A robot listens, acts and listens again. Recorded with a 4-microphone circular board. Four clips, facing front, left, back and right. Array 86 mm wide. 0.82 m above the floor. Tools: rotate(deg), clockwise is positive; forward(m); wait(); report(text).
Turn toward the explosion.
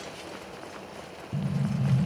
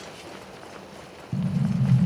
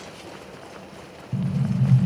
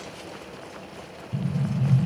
rotate(-105)
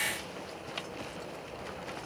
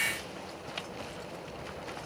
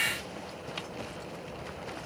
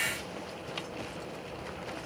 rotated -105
report("I heard an explosion from this way, but can't make it out now.")